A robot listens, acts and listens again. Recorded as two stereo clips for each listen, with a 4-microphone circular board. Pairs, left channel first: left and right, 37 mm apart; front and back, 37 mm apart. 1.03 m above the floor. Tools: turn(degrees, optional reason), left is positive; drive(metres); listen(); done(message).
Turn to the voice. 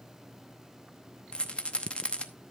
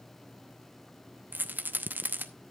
listen()
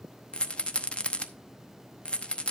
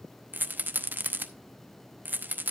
listen()
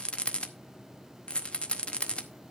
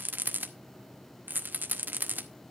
done("I can't make out anyone speaking, only a rattle.")